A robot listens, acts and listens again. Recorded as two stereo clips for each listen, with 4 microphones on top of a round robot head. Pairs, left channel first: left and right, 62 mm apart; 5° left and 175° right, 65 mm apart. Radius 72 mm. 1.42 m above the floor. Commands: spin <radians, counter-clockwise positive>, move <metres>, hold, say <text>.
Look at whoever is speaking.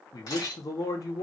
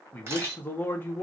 spin 1.13
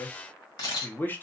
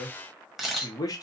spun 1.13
spin 0.52
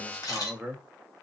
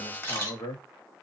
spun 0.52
say Found it: a man speaking, straight ahead.